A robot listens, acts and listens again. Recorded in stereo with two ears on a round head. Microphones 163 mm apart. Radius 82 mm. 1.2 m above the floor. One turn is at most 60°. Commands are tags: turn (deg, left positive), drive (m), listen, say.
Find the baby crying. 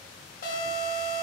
<listen/>
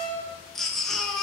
<turn deg="30"/>
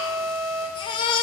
<turn deg="60"/>
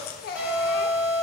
<turn deg="60"/>
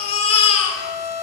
<turn deg="35"/>
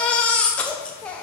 <say>Found it: a baby crying, straight ahead, under 1 m away.</say>